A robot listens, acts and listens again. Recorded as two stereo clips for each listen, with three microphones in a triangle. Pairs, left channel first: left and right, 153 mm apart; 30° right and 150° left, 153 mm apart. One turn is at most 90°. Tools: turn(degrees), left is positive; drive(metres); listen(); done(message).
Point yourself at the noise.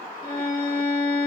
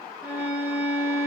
turn(degrees=75)
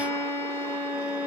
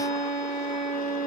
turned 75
turn(degrees=15)
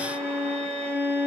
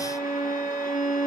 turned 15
turn(degrees=10)
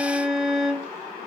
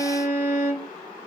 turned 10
done("Facing the violin.")